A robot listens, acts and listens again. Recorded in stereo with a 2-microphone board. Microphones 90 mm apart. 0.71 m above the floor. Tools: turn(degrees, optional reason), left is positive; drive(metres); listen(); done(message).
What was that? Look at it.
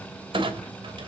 turn(degrees=-90)
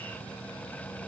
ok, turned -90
done("Facing where the clunk came from. I can't hear it now.")